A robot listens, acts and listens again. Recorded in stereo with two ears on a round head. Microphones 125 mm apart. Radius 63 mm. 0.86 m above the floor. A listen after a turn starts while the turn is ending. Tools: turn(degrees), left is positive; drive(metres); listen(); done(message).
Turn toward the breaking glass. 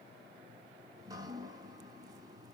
listen()
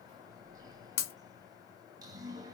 turn(degrees=90)
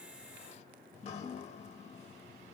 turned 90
done("I heard breaking glass from this way, but can't make it out now.")